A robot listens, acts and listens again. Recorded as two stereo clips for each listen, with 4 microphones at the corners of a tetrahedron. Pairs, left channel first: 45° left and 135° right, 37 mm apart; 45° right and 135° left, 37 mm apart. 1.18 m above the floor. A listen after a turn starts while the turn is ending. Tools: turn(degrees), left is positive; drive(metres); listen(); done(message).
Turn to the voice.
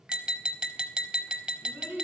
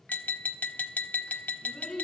turn(degrees=-125)
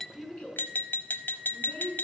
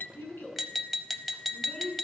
done("Found it: a child speaking, straight ahead.")